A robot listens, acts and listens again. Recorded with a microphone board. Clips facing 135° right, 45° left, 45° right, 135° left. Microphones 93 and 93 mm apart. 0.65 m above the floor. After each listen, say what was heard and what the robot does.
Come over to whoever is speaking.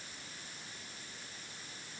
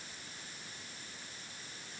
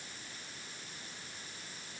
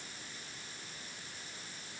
Keep listening.
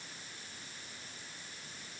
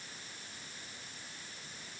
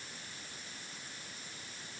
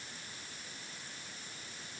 Keep listening.
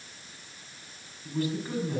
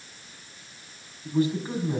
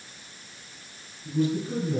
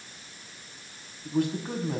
The man speaking: 110° left. Turn 110° left.
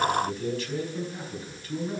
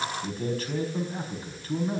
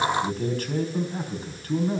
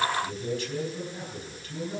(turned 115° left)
Drive 1.0 m forward.
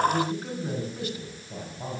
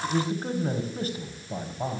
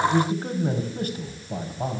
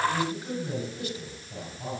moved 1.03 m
Drive 1.0 m forward.
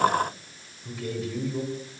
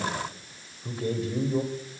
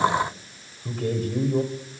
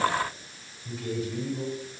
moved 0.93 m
The man speaking is now 10° right. Turn 10° right.
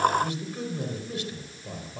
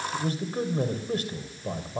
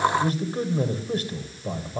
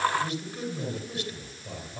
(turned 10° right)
Drive 1.0 m forward.
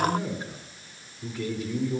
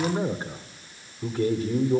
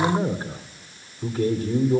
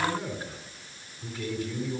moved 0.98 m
Drive 1.0 m forward.
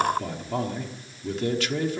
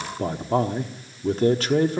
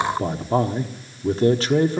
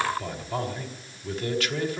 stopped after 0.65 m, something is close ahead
Arrived at the man speaking, straight ahead.